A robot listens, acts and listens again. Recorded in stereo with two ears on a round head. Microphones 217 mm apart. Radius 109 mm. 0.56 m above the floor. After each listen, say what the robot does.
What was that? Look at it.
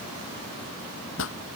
Turn 55° left.
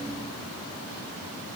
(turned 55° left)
Keep listening.
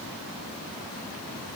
I heard a pop, but can't make it out now. It was about straight ahead or 70° left.